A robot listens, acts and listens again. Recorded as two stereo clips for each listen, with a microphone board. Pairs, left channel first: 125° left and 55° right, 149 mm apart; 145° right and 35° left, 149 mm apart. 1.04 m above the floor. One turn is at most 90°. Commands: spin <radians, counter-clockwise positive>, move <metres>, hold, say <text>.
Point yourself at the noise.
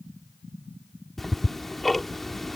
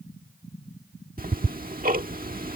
spin 0.61
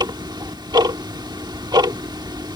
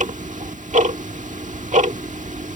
say Facing the ticking.